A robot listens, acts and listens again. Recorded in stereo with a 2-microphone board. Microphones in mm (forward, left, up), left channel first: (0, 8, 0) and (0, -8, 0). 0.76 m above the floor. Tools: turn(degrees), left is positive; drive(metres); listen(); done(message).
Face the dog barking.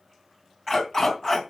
turn(degrees=20)
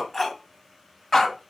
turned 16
turn(degrees=15)
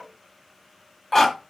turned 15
turn(degrees=30)
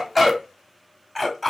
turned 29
done("Found it: a dog barking, straight ahead, 2 to 4 m away.")